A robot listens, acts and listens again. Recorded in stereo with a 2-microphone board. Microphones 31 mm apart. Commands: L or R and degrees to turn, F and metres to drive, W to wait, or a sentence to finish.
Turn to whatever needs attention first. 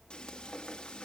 W
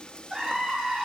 R25
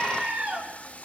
R130
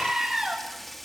R15
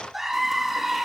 Found it: a scream, straight ahead, over 4 m away.